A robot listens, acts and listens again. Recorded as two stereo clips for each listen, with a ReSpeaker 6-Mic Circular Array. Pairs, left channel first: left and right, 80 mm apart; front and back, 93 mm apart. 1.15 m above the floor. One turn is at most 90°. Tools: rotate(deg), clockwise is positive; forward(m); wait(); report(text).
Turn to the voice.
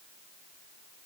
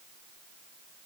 wait()
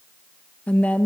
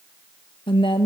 rotate(-20)
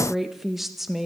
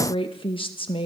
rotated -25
report("Found it: a woman speaking, straight ahead, 1 to 2 m away.")